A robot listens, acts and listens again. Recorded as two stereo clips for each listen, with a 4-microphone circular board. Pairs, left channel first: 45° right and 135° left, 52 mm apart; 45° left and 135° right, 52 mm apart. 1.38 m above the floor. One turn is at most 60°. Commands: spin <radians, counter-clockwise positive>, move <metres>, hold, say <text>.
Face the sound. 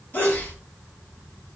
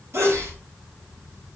spin -1.05
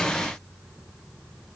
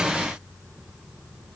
spin -0.70
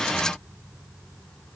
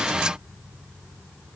say I heard a sneeze from this way, but can't make it out now.